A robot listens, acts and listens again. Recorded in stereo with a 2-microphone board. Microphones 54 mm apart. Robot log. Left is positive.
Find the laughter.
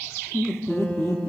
note: The laughter: about 60° left or 120° left.
cmd yaw +60
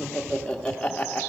note: So it is at 20° left.
cmd yaw +20
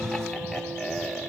end: Facing the laughter.